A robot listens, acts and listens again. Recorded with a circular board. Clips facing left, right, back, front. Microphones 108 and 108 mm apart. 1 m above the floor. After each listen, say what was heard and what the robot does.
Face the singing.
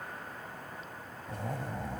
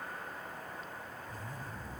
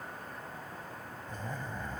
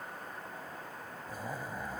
Keep listening.
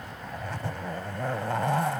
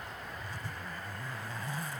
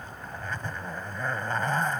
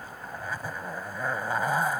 Keep listening.
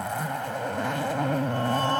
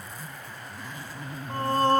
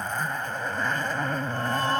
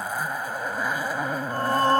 The singing: 45° right. Turn 45° right.
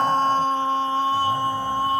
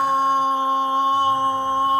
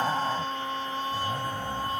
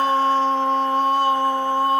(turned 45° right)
The singing is now 20° right. Turn 20° right.
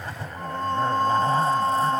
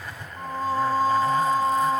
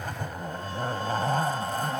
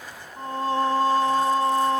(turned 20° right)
Found it: singing, straight ahead.